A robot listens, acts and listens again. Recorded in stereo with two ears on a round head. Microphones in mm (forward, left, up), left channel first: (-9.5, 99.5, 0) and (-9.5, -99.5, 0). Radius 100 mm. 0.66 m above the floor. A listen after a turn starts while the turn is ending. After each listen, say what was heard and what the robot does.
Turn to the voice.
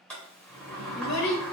Turn 90° left.
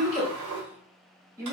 So it is at 15° right. Turn 15° right.
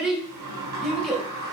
Found it: a child speaking, straight ahead.